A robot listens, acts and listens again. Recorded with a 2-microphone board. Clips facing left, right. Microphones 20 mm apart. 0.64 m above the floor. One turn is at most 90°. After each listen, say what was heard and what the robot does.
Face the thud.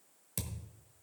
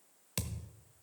The thud: about 30° right or 150° right. Turn 30° right.
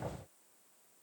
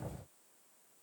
Keep listening.
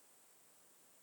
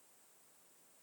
I heard a thud, but can't make it out now. It was about straight ahead or 120° right.